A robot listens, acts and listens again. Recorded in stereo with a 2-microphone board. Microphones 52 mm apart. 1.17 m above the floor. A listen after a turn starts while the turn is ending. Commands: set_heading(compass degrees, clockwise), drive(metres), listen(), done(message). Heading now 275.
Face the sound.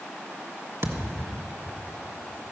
set_heading(345)
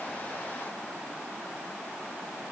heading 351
listen()
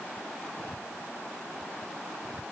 done("I heard a thud, but can't make it out now. It was about 10° left or 35° right.")